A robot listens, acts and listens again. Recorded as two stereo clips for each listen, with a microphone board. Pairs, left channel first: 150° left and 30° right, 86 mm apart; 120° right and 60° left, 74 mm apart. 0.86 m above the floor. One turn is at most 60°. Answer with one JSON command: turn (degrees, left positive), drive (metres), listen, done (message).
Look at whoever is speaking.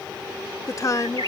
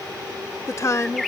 {"turn": -60}
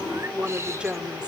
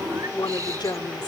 {"turn": -60}
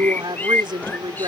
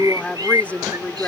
{"turn": -50}
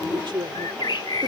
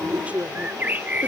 {"turn": -10}
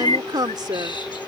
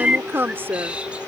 {"done": "Found it: a woman speaking, straight ahead."}